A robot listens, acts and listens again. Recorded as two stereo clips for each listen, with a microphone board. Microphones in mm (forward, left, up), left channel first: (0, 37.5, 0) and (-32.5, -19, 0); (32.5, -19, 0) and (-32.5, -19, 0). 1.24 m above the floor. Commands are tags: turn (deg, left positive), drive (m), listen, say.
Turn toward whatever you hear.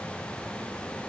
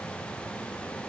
<listen/>
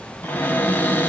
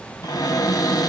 <say>Facing the cupboard door.</say>